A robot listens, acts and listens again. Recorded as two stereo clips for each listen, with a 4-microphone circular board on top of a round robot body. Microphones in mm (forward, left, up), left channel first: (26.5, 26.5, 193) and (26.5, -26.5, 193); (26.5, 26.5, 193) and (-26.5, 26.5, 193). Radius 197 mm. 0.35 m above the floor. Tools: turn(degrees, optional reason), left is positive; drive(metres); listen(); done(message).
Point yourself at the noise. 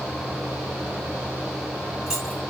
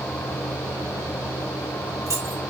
turn(degrees=-170, reason="The keys jangling: 170° right.")
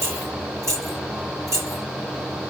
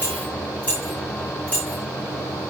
turn(degrees=-65, reason="The keys jangling is now 65° right.")
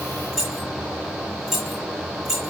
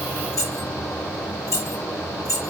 done("Found it: keys jangling, straight ahead.")